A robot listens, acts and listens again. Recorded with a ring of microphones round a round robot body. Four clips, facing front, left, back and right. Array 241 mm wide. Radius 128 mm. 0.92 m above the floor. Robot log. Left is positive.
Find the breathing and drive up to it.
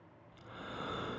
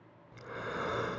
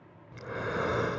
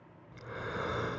note: The breathing: straight behind.
cmd yaw +180
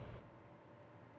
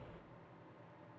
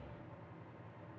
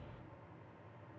note: The breathing is now 20° left.
cmd yaw +20
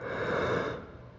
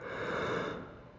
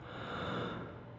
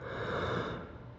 cmd fwd 1.0
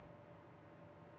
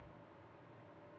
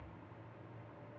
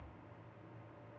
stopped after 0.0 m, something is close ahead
cmd idle
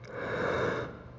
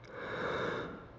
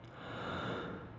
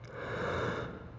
end: Blocked. The breathing is further on, straight ahead.